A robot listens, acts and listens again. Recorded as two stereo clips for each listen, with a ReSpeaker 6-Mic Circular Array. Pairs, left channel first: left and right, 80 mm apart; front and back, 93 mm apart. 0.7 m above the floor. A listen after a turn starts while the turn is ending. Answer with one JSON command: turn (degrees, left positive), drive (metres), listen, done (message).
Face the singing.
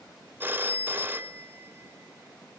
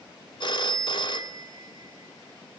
{"listen": true}
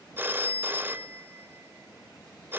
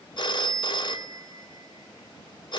{"listen": true}
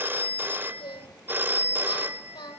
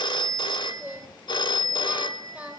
{"turn": 105}
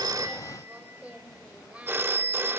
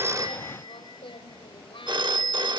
{"turn": -20}
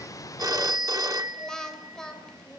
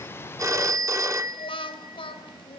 {"done": "Facing the singing."}